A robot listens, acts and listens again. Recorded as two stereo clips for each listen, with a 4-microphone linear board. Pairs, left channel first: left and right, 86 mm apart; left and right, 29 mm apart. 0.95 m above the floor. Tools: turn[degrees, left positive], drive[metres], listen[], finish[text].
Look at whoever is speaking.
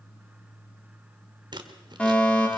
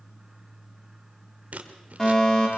Action: listen[]
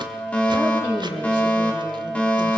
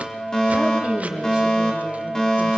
Thought: The woman speaking: about 20° right or 160° right.
Action: turn[-20]
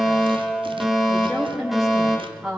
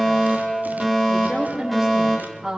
Action: finish[Found it: a woman speaking, straight ahead.]